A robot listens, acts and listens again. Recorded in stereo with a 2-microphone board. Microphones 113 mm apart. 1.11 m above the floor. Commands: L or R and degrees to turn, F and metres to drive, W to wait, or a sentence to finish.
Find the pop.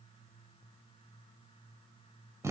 W
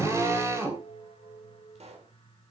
R70
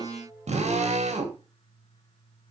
W
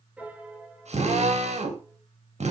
I heard a pop, but can't make it out now. It was about straight ahead or 40° right.